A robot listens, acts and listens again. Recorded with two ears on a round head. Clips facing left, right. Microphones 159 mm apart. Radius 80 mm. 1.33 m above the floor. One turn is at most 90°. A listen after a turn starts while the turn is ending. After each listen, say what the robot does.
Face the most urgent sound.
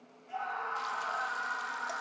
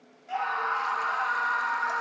Turn 90° right.
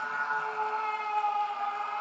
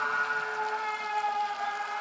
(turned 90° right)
Turn 10° right.
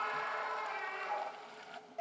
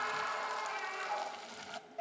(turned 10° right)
Found it: a scream, straight ahead.